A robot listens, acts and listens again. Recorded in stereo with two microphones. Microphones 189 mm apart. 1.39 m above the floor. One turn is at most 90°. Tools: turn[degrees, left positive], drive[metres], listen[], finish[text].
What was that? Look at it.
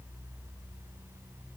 Action: listen[]
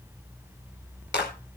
Thought: The clap: about 75° left or 105° left.
Action: turn[75]
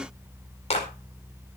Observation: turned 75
Thought: So it is at 35° left.
Action: turn[35]
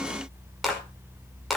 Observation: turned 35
Action: finish[Found it: a clap, straight ahead.]